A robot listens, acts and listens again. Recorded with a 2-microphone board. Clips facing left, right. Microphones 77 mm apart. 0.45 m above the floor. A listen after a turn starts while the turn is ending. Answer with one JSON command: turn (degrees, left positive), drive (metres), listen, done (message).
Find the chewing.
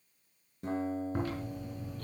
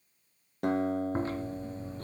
{"turn": -30}
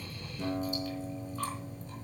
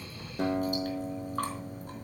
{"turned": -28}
{"turn": -120}
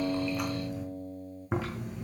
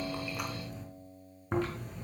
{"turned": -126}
{"done": "Facing the chewing."}